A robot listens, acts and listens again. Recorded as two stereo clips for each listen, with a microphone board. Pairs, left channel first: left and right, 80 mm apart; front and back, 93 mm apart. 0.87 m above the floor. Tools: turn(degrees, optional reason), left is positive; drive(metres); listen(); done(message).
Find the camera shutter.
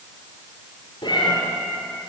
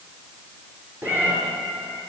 listen()
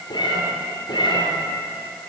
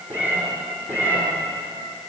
listen()
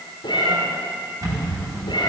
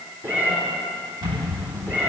turn(degrees=-140, reason="The camera shutter: 140° right.")
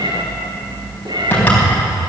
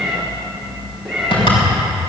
turn(degrees=20, reason="The camera shutter is now 20° left.")
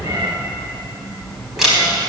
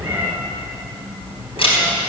done("Found it: a camera shutter, straight ahead.")